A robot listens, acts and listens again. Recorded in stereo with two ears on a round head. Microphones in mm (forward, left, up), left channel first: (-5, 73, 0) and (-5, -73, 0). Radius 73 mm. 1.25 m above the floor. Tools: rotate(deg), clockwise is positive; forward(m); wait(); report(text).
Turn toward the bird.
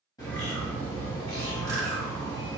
rotate(-25)
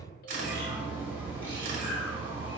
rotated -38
rotate(15)
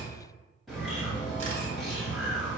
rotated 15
report("Facing the bird, 1 to 2 m away.")